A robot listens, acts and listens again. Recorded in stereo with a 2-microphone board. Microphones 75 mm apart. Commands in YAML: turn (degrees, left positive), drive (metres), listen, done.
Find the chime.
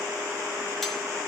listen: true
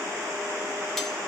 listen: true
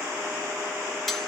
done: "I can't make out a chime."